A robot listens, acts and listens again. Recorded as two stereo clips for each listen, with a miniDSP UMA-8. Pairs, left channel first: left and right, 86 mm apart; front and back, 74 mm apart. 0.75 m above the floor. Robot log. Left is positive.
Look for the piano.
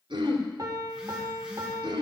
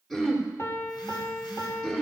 note: The piano: 50° right.
cmd yaw -50
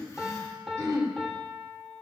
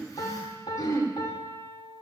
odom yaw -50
end: Facing the piano.